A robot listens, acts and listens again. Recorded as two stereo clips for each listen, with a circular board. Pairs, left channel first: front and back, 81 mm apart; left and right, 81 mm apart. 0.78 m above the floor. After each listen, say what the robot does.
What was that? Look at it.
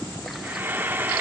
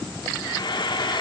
Turn 115° left.
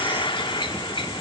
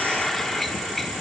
Facing the frying, 1 to 2 m away.